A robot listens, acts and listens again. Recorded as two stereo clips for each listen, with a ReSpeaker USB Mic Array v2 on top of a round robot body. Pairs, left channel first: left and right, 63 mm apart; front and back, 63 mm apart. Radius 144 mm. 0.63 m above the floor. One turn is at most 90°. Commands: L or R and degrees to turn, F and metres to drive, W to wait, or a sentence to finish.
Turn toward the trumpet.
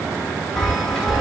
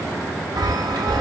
W
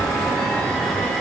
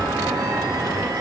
W
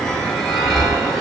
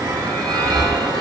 I can't make out a trumpet to turn to.